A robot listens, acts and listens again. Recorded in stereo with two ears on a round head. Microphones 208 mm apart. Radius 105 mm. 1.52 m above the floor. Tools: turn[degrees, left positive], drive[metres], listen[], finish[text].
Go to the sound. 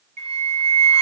Thought: The flute: about 25° right or 155° right.
Action: turn[-25]
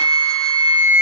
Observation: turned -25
Action: drive[1.0]
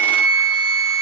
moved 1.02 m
Action: drive[1.0]
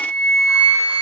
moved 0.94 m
Thought: The flute is now 10° right.
Action: turn[-10]
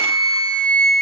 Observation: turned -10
Action: drive[1.0]
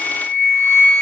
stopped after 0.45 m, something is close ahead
Thought: The flute is now 10° left.
Action: turn[10]
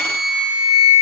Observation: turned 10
Action: finish[I am next to the flute.]